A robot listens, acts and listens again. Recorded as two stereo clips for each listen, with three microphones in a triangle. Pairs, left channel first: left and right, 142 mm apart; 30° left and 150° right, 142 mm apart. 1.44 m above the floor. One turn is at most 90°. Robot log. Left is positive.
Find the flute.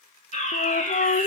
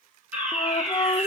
note: The flute: 90° left.
cmd yaw +90
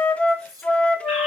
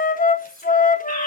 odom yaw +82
note: The flute is now 10° left.
cmd yaw +10
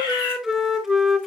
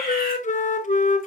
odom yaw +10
end: Facing the flute.